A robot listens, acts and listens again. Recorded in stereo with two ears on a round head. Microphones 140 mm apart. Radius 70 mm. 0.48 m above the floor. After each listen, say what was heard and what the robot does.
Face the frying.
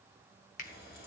The frying: about 75° left or 105° left. Turn 75° left.
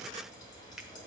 So it is at 30° left. Turn 30° left.
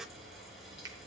Found it: frying, straight ahead, over 4 m away.